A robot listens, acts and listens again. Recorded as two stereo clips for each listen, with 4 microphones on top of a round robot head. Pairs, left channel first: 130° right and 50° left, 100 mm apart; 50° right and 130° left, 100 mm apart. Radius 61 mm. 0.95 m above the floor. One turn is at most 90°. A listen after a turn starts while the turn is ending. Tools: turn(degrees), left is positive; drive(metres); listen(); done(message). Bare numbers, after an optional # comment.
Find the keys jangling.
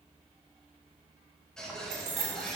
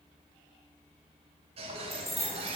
# The keys jangling: 40° left.
turn(40)
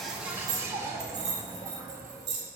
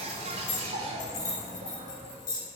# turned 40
done("Facing the keys jangling, 2 to 4 m away.")